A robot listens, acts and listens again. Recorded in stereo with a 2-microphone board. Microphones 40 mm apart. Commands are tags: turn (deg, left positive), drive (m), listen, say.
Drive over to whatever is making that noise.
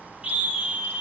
<turn deg="-25"/>
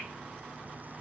<listen/>
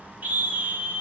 <turn deg="-130"/>
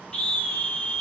<turn deg="15"/>
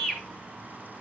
<drive m="1.0"/>
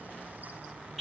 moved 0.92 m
<drive m="1.0"/>
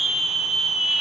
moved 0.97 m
<turn deg="-10"/>
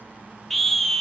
<drive m="1.0"/>
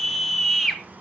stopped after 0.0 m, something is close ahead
<say>I am next to the scream.</say>